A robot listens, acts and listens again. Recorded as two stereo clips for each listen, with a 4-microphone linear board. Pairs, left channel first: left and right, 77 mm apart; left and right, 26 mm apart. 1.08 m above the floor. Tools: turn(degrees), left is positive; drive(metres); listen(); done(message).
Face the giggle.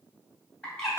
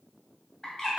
listen()
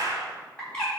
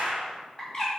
listen()
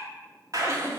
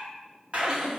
turn(degrees=-40)
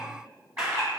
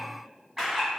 listen()
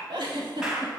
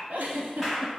turn(degrees=-100)
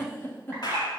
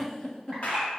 turn(degrees=30)
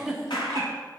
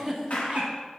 done("Found it: a giggle, straight ahead, 1 to 2 m away.")